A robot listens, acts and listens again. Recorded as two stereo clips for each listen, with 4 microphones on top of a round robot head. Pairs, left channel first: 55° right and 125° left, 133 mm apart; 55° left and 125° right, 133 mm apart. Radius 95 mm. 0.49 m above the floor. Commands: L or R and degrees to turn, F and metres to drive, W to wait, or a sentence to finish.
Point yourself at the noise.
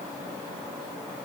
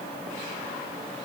W
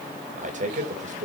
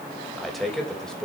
L140
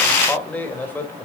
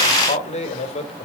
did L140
L20
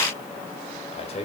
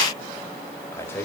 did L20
R20
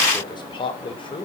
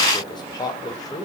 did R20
Found it: a man speaking, straight ahead.